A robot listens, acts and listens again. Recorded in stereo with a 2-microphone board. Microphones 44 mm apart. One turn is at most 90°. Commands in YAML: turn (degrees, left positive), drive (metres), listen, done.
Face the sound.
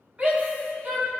turn: -35
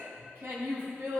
turn: -90
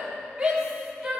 turn: -15
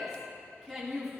done: "Facing the shout."